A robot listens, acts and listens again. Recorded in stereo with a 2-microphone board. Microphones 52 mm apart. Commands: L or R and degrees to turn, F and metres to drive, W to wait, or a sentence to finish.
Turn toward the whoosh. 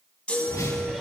L90
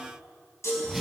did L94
Found it: a whoosh, straight ahead.